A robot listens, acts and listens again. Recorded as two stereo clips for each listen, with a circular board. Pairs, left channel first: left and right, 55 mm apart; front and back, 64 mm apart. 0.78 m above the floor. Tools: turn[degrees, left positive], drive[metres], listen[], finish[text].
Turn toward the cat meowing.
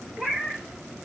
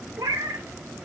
Thought: The cat meowing: 175° left.
Action: turn[175]
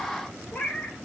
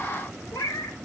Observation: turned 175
Thought: The cat meowing is now 20° left.
Action: turn[20]
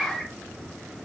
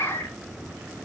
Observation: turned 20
Action: finish[Facing the cat meowing, 1 to 2 m away.]